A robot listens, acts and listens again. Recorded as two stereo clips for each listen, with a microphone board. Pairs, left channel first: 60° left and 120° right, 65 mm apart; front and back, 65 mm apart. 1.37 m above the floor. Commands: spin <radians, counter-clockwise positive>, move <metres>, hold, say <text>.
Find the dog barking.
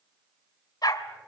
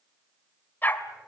spin 1.05
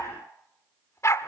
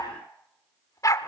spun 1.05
spin 0.44
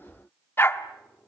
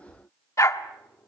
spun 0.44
spin 0.44
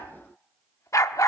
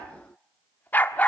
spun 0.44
spin 1.05
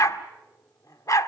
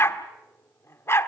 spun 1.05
spin 0.79
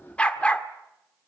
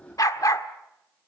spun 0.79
spin -0.17
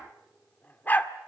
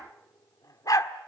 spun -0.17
say Facing the dog barking.